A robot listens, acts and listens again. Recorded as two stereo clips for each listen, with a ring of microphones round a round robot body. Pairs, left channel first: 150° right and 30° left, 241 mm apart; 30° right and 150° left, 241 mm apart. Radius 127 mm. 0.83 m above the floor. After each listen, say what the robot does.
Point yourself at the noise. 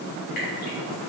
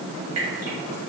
Turn 155° left.
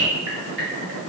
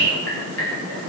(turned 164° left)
Facing the dripping, 2 to 4 m away.